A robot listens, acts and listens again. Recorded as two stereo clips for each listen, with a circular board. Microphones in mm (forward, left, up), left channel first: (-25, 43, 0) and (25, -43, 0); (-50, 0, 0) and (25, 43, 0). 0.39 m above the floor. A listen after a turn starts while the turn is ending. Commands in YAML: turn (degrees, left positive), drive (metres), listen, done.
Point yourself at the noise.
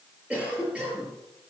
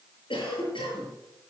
turn: -135
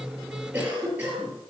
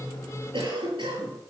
turn: 15
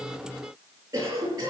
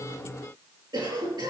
done: "Found it: a cough, straight ahead, over 4 m away."